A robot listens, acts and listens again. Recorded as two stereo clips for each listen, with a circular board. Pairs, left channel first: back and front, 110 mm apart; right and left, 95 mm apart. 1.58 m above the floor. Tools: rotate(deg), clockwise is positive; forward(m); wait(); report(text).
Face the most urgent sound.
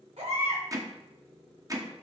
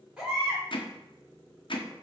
rotate(-10)
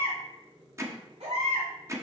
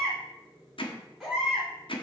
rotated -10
report("Facing the baby crying.")